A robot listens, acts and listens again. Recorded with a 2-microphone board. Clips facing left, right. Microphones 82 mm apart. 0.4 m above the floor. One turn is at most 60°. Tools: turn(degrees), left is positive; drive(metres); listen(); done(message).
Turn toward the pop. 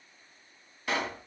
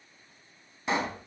turn(degrees=-20)
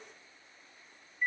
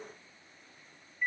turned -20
listen()
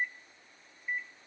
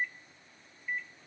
done("I heard a pop, but can't make it out now. It was about straight ahead or 140° right.")